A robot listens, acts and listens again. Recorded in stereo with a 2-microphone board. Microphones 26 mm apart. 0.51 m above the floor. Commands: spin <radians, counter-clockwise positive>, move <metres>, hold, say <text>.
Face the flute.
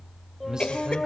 spin 0.52
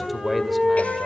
spin -0.52
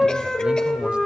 spin 0.26
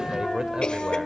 say Facing the flute, over 4 m away.